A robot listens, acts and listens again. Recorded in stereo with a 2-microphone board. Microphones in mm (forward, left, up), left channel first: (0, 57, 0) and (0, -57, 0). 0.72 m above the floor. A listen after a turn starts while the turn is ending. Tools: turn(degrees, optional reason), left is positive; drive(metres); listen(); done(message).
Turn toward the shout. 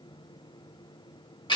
listen()
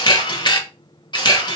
listen()
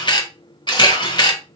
done("I can't make out a shout, only a camera shutter.")